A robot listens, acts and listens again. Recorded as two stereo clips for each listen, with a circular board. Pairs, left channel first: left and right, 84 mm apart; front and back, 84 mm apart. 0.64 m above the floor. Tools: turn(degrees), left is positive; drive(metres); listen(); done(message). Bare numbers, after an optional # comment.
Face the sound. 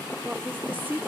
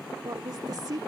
# The woman speaking: 155° right.
turn(-155)
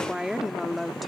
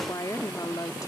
done("Facing the woman speaking.")